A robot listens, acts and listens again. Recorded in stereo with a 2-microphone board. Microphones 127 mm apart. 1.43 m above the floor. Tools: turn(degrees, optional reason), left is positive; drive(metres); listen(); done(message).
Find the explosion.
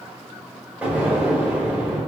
turn(degrees=-30)
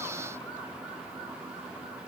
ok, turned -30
listen()
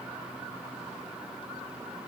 done("I heard an explosion, but can't make it out now. It was about 15° left or 135° right.")